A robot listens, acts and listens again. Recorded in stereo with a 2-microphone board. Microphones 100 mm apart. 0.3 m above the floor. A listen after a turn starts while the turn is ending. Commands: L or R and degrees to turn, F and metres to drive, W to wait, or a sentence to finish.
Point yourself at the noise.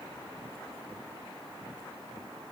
W
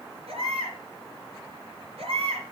R75
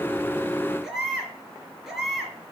Found it: a baby crying, straight ahead, 2 to 4 m away.